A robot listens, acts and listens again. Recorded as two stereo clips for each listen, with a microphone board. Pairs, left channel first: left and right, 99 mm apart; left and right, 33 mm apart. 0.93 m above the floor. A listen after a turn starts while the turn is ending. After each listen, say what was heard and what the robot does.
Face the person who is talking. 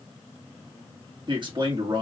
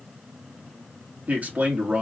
The man speaking: about 55° right or 125° right. Turn 55° right.
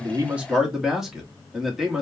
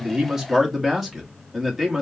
Found it: a man speaking, straight ahead.